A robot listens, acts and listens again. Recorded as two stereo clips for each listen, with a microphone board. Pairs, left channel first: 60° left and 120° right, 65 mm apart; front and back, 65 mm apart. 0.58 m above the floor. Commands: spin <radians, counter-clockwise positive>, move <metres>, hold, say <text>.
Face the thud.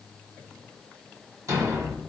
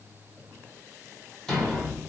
spin -1.40
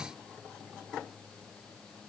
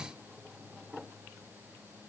say I heard a thud from this way, but can't make it out now.